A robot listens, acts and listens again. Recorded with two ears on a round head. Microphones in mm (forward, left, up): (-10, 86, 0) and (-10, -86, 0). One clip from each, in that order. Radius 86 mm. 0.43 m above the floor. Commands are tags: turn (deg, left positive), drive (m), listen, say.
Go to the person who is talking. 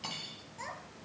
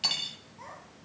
<turn deg="90"/>
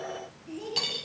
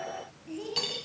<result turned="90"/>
<turn deg="-10"/>
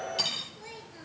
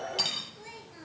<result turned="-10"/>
<drive m="1.0"/>
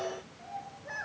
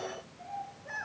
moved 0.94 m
<drive m="1.0"/>
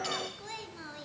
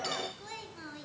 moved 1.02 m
<drive m="1.0"/>
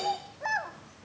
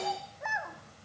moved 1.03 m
<turn deg="15"/>
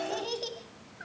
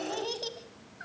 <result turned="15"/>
<drive m="1.0"/>
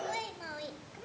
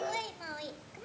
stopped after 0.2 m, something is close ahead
<turn deg="-10"/>
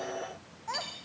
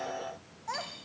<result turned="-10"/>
<say>I am next to the child speaking.</say>